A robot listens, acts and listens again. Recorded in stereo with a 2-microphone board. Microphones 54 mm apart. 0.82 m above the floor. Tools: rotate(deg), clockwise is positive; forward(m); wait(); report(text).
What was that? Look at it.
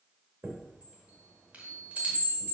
rotate(30)
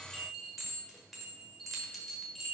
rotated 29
report("Facing the chime.")